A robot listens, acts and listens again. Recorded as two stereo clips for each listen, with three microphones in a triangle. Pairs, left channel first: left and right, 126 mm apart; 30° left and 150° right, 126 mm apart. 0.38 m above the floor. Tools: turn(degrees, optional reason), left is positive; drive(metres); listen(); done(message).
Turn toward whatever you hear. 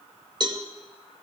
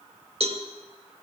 turn(degrees=-135, reason="The cowbell: 135° right.")
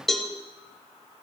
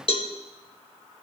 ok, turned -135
done("Facing the cowbell.")